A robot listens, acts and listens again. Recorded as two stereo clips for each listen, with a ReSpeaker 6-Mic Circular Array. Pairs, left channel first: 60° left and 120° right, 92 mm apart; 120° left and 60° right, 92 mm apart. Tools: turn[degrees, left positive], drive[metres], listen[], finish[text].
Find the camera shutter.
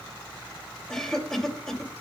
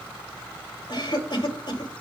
Action: listen[]
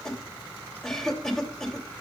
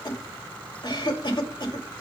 Action: listen[]
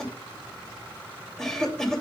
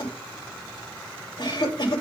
Action: finish[I can't make out a camera shutter to turn to.]